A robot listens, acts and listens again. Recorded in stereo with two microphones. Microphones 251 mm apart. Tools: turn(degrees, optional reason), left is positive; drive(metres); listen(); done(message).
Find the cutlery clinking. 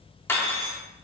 turn(degrees=30)
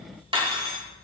turn(degrees=-20, reason="So it is at 20° right.")
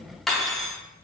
done("Facing the cutlery clinking.")